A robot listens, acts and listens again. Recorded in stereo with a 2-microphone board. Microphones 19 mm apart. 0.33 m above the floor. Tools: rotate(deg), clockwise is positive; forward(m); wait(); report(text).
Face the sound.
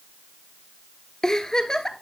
rotate(-35)
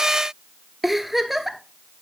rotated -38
report("Facing the giggle, under 1 m away.")